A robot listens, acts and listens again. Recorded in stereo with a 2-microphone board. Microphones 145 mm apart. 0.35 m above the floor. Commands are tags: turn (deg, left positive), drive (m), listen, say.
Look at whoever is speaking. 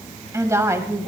<turn deg="-20"/>
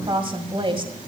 <turn deg="-135"/>
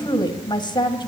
<turn deg="40"/>
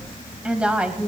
<turn deg="-10"/>
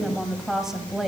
<say>Found it: a woman speaking, straight ahead, 2 to 4 m away.</say>